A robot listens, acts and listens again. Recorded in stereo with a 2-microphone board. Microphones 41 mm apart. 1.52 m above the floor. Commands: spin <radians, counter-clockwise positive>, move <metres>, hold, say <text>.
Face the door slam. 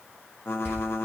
spin 1.22
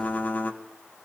hold
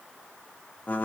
say I heard a door slam, but can't make it out now. It was about straight ahead or 40° left.